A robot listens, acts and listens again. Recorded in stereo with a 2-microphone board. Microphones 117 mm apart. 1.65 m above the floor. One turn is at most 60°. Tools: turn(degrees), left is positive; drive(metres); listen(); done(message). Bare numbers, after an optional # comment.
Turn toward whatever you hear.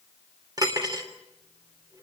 # The cutlery clinking: about 35° right or 145° right.
turn(-35)
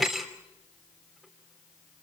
done("Found it: cutlery clinking, straight ahead, 2 to 4 m away.")